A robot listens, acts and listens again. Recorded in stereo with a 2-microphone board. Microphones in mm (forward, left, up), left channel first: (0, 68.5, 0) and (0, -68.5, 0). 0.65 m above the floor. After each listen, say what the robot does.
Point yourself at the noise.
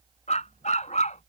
Turn 60° left.
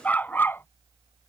Turn 15° left.
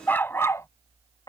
Turn 30° left.
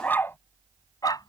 Turn 30° left.
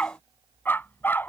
Turn 15° left.
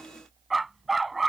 Found it: a dog barking, straight ahead.